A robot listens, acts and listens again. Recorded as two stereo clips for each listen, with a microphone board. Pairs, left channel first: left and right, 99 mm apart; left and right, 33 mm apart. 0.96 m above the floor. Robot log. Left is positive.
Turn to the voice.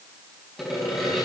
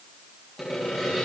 cmd idle
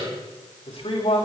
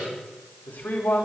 cmd yaw +90
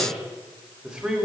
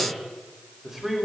end: Facing the man speaking, over 4 m away.